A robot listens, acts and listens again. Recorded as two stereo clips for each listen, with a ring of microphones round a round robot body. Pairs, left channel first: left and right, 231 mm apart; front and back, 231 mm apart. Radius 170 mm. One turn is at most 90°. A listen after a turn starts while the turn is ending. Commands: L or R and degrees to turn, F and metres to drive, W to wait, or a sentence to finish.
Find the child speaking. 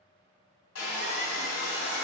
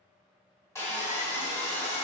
W
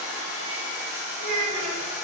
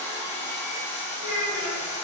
R90
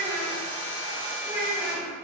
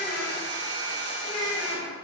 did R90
Facing the child speaking.